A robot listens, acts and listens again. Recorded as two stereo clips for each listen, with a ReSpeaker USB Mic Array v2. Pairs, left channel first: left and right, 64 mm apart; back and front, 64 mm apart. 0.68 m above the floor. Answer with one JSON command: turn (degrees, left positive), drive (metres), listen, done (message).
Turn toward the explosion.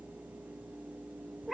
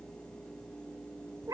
{"listen": true}
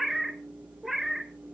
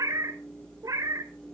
{"listen": true}
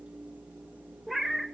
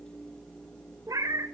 {"done": "I can't make out an explosion to turn to."}